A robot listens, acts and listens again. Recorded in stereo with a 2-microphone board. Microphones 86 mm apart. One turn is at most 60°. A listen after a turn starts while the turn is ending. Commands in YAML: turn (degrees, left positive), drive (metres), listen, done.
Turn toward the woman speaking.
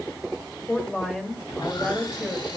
turn: 30
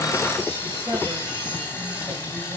listen: true
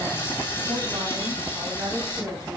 turn: -40
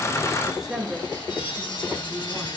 done: "Facing the woman speaking, 2 to 4 m away."